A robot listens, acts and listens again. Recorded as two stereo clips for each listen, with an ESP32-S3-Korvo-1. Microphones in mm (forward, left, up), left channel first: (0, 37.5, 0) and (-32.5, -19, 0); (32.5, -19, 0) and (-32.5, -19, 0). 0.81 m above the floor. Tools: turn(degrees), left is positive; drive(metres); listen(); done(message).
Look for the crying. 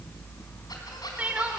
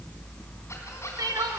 turn(degrees=170)
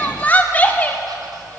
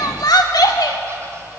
done("Found it: crying, straight ahead.")